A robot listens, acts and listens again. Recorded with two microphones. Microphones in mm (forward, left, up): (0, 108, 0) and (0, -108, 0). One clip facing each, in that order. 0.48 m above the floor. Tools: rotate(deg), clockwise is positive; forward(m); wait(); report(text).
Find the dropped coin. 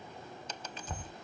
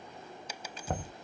rotate(30)
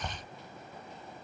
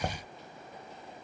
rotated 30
wait()
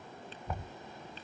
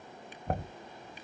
report("I heard a dropped coin, but can't make it out now. It was about 20° left or 140° right.")